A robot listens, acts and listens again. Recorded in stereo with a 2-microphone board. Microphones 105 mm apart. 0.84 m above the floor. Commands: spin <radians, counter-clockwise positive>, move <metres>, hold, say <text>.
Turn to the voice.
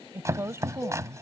spin -0.52
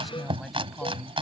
say Facing the woman speaking.